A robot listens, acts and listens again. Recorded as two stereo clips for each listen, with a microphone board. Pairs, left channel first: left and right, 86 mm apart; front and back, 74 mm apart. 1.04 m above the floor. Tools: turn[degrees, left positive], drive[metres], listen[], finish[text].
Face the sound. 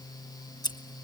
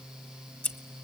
Thought: The scissors: 60° left.
Action: turn[60]
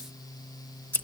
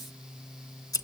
Thought: The scissors is now 20° left.
Action: turn[20]
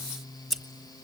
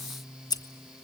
Action: finish[Found it: scissors, straight ahead, 1 to 2 m away.]